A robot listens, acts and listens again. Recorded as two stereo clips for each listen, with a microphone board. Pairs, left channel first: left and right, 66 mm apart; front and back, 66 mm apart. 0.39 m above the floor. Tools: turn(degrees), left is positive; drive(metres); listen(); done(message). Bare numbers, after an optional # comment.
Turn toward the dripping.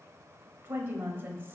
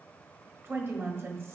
listen()
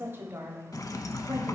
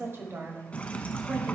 # The dripping: 70° left.
turn(70)
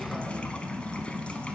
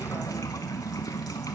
# The dripping is now 15° left.
turn(15)
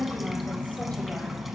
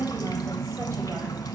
done("Found it: dripping, straight ahead, under 1 m away.")